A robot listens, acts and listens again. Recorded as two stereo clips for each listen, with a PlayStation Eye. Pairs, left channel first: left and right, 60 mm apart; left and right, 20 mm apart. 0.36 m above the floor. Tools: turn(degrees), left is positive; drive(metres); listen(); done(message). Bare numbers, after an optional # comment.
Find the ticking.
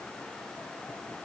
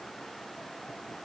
listen()
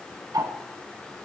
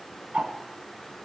turn(-90)
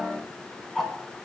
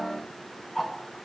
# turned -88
done("Facing the ticking.")